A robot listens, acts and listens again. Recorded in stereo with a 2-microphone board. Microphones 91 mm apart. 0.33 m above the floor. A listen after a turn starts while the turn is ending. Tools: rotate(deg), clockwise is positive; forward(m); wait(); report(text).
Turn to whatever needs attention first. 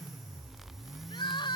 rotate(-60)
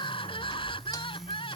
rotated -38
rotate(-80)
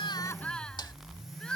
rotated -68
rotate(-10)
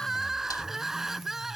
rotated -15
report("Facing the crying.")